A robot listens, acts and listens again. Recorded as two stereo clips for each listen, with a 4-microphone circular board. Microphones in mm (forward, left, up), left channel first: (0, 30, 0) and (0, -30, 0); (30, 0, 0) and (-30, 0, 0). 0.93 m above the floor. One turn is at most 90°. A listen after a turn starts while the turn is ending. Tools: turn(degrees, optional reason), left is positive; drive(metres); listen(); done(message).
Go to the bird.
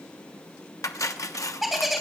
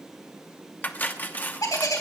drive(metres=1.0)
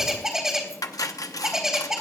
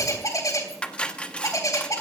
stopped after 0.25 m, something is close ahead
done("Something is in my way. I am facing the bird but have not reached it.")